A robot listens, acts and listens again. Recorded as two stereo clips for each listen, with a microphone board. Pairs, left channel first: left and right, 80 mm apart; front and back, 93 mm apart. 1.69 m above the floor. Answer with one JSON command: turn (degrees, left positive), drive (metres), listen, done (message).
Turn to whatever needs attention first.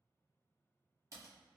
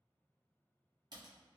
{"listen": true}
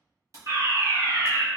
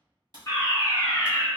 {"turn": -55}
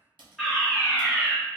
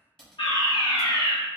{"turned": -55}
{"done": "Facing the fire alarm, 1 to 2 m away."}